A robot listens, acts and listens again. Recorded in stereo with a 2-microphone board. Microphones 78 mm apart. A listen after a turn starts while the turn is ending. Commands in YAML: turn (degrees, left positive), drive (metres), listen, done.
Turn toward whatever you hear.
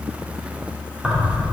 turn: -30
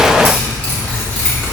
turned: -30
turn: 30
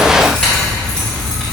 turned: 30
turn: 15
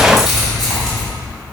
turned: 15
done: "Found it: keys jangling, straight ahead."